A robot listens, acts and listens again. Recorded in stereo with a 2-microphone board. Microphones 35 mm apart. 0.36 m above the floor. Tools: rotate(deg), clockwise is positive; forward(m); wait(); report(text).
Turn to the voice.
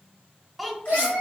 rotate(-30)
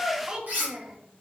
rotate(30)
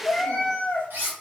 wait()
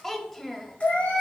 rotate(-10)
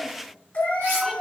wait()
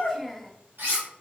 report("Facing the child speaking.")